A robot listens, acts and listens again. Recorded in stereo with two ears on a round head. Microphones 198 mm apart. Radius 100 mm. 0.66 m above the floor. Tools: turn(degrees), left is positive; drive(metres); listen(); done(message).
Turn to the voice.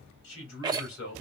turn(degrees=60)
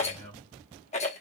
done("Facing the man speaking.")